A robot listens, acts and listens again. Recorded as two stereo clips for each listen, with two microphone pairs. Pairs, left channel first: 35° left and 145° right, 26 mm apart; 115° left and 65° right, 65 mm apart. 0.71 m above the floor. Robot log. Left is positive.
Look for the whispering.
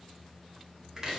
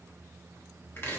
cmd idle
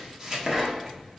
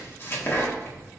cmd idle
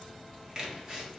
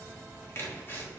end: I can't make out whispering, only chopping.